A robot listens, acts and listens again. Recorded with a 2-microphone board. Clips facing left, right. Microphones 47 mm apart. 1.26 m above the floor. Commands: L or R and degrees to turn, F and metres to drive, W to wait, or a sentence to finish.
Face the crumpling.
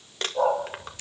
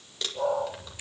L50
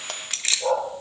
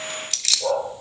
L80
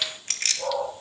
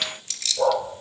W
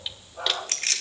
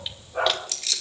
W
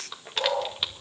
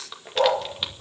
Found it: crumpling, straight ahead, 2 to 4 m away.